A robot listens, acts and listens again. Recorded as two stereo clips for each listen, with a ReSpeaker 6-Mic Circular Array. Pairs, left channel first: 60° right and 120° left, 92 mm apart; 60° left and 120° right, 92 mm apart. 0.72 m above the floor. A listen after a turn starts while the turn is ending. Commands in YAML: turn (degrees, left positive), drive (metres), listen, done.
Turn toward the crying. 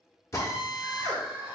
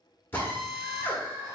turn: -175
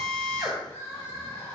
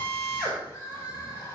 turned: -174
done: "Facing the crying."